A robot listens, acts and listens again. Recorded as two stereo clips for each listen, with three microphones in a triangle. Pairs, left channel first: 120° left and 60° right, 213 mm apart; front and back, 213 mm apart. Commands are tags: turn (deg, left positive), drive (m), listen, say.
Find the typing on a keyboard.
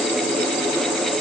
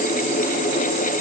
<listen/>
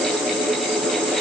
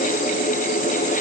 <listen/>
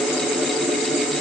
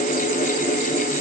<say>I can't make out typing on a keyboard.</say>